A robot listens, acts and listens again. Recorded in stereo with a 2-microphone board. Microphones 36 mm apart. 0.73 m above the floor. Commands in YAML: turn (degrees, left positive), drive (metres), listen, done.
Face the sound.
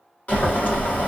turn: 45
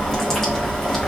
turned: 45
turn: 10
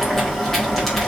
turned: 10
done: "Found it: boiling, straight ahead, 1 to 2 m away."